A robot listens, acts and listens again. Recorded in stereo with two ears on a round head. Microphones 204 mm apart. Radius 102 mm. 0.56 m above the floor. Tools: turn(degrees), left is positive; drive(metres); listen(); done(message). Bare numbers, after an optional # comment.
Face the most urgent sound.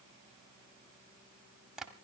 listen()
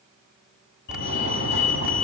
# The fire alarm: about 50° left or 130° left.
turn(50)
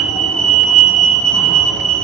done("Facing the fire alarm, over 4 m away.")